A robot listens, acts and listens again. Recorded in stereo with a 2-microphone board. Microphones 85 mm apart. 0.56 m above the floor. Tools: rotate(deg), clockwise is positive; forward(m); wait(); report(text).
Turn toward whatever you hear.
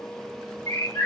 rotate(-35)
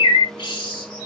rotate(-110)
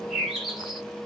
report("Found it: a bird, straight ahead.")